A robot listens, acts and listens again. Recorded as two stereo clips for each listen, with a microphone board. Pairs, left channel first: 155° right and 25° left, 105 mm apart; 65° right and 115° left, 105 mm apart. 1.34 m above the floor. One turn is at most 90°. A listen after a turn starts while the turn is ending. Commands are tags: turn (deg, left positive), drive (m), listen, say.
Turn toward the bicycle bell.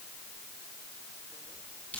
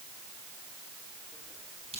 <listen/>
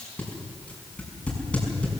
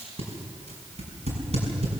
<listen/>
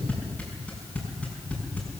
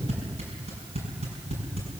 <say>I can't make out a bicycle bell, only tape being pulled.</say>